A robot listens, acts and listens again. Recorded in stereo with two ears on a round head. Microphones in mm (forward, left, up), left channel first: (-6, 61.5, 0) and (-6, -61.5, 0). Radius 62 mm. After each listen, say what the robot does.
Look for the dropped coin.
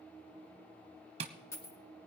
Turn 20° left.
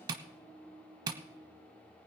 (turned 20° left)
Keep listening.
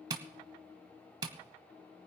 I heard a dropped coin, but can't make it out now. It was about straight ahead or 140° left.